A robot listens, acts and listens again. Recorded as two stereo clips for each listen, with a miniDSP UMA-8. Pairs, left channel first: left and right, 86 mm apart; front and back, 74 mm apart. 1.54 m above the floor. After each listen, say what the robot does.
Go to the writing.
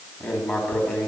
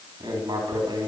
Turn 160° left.
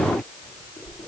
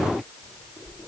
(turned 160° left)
Turn 25° left.
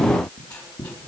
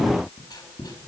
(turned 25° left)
Turn 10° left.
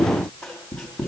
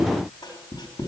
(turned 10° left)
Drive 1.0 m forward.
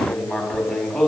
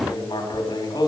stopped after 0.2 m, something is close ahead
Blocked. The writing is further on, straight ahead.